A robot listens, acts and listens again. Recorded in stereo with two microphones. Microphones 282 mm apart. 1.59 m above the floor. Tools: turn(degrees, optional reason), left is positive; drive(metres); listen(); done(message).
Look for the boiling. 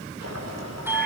turn(degrees=-60, reason="The boiling: about 60° right or 120° right.")
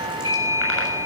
listen()
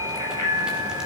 listen()
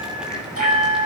done("I heard boiling, but can't make it out now. It was about straight ahead or 60° right.")